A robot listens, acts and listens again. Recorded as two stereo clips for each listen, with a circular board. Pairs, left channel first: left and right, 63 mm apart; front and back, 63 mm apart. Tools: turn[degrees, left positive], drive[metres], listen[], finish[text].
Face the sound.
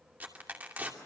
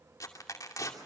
Thought: The tearing paper: 25° right.
Action: turn[-25]
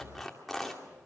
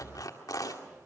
Action: finish[Facing the tearing paper, 2 to 4 m away.]